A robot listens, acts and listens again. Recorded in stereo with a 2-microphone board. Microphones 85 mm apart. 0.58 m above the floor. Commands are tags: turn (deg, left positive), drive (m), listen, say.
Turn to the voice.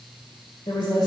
<turn deg="70"/>
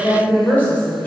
<turn deg="20"/>
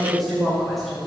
<say>Facing the woman speaking.</say>